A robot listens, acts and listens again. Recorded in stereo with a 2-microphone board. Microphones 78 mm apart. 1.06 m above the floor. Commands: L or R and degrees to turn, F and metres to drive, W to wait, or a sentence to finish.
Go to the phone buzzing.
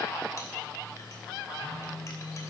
L30
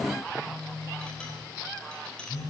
L115
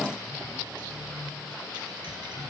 F1.0
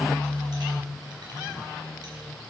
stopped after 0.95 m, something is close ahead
L10
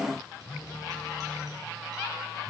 I am next to the phone buzzing.